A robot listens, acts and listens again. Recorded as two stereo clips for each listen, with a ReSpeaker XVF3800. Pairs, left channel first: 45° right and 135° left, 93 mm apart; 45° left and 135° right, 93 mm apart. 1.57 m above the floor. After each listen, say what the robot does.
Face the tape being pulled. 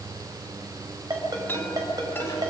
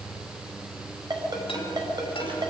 Keep listening.
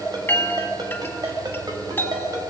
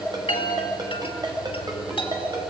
Keep listening.
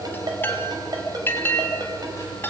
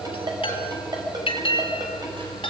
I can't make out tape being pulled to turn to.